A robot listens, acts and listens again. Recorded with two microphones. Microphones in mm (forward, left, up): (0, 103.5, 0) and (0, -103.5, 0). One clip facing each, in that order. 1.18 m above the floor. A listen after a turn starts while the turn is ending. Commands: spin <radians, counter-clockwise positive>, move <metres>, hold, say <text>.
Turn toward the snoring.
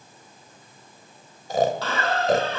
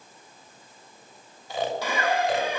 spin 0.79
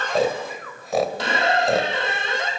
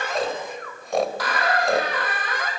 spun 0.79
say Found it: snoring, straight ahead.